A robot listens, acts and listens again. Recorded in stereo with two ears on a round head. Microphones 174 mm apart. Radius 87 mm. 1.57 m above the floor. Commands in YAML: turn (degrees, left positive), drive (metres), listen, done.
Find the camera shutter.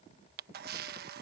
turn: -55
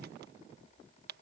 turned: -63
turn: -55
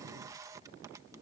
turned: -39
turn: -20
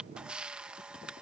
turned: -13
done: "Found it: a camera shutter, straight ahead."